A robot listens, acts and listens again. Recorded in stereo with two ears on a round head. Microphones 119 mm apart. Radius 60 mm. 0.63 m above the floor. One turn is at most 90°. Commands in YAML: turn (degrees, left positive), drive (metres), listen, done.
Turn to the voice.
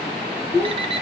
turn: 20
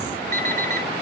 listen: true
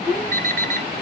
turn: 90
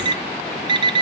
turn: 50
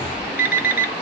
listen: true
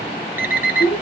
turn: 40
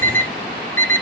listen: true
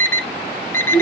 done: "Found it: a child speaking, straight ahead."